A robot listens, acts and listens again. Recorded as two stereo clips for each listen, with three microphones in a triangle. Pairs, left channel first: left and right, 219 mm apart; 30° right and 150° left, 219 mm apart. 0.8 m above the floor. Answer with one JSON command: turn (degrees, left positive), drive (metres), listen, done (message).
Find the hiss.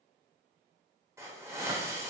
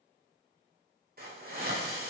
{"turn": -165}
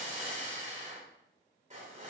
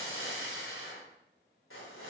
{"turn": -35}
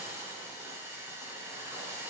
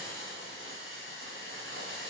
{"turn": -10}
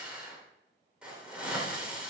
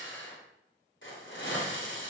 {"done": "Facing the hiss, 2 to 4 m away."}